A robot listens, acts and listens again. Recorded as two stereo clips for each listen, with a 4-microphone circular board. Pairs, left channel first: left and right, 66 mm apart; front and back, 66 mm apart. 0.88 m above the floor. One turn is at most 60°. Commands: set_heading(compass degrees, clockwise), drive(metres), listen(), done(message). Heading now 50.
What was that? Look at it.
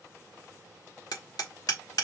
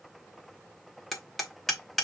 set_heading(350)
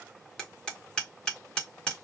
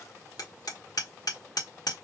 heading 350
set_heading(340)
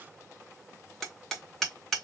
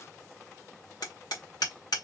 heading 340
done("Found it: hammering, straight ahead, 1 to 2 m away.")